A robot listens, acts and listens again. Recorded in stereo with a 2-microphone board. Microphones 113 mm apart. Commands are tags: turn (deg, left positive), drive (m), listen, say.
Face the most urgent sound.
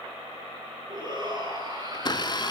<turn deg="-40"/>
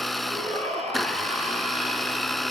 <turn deg="-100"/>
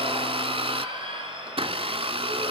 <turn deg="-45"/>
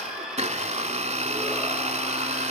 <say>Found it: a shout, straight ahead.</say>